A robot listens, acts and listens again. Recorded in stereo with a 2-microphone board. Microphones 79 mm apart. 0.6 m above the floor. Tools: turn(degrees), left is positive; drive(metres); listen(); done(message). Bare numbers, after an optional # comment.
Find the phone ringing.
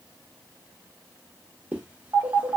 # The phone ringing: about 60° right or 120° right.
turn(-60)
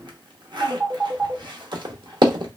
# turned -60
# So it is at 40° right.
turn(-40)
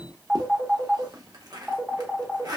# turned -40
done("Facing the phone ringing.")